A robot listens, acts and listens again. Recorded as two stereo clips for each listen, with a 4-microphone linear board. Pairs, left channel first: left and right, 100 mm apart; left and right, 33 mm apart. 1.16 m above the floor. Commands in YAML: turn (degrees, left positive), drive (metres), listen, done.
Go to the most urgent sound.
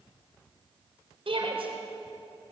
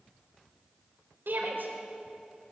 turn: -70
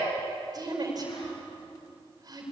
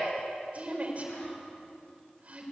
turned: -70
turn: -45
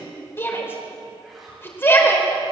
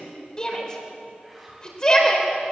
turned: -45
turn: 25
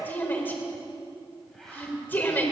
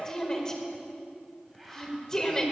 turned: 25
turn: 20
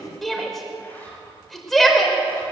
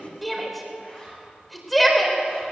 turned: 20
drive: 1.0
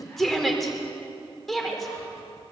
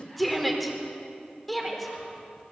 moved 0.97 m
drive: 1.0
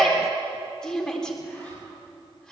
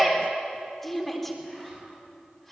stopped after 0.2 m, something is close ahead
done: "Blocked. The shout is further on, straight ahead."